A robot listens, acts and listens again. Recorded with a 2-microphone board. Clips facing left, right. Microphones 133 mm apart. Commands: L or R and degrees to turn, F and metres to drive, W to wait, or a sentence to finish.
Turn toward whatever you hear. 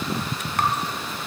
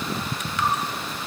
L55
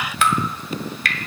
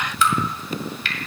L70
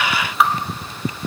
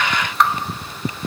Found it: dripping, straight ahead.